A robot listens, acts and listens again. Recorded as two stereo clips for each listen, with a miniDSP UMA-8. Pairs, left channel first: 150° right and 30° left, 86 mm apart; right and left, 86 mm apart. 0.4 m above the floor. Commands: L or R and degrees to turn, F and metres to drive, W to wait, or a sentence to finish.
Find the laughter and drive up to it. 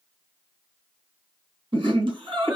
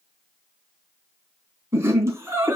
L35
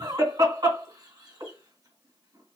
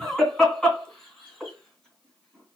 F1.0
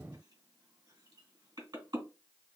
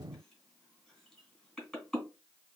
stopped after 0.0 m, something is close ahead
Something is in my way. I am facing the laughter but have not reached it.